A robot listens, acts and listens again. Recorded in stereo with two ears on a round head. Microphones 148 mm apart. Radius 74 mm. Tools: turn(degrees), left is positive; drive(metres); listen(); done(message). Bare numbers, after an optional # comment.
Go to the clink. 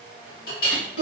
# The clink: about 60° left or 120° left.
turn(60)
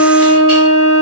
listen()
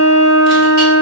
listen()
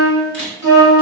done("I heard a clink, but can't make it out now. It was about straight ahead or 60° left. I did not reach it.")